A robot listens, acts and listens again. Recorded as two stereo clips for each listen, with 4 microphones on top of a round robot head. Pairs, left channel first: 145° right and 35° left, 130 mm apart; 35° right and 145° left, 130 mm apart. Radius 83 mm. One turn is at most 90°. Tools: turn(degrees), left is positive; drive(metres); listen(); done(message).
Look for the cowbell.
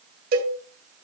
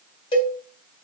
turn(degrees=20)
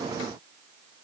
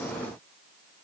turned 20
listen()
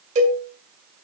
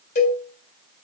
done("Found it: a cowbell, straight ahead, 2 to 4 m away.")